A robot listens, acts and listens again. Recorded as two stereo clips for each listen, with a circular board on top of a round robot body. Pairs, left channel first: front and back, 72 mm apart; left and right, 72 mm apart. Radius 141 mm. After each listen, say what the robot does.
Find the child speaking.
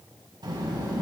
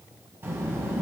Turn 150° right.
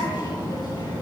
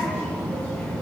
Turn 25° left.
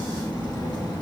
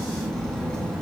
Turn 10° left.
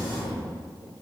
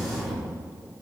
Found it: a child speaking, straight ahead, over 4 m away.